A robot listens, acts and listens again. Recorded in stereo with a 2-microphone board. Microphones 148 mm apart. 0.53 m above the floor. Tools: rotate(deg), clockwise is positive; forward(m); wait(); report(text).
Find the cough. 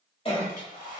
rotate(-40)
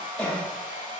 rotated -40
report("Found it: a cough, straight ahead.")